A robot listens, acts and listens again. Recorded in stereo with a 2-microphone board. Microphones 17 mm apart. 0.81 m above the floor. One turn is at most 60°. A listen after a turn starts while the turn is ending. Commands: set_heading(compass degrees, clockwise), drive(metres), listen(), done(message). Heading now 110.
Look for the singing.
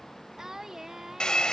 set_heading(140)
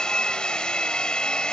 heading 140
listen()
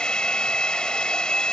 listen()
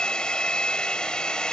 done("I heard singing, but can't make it out now. It was about straight ahead or 120° right.")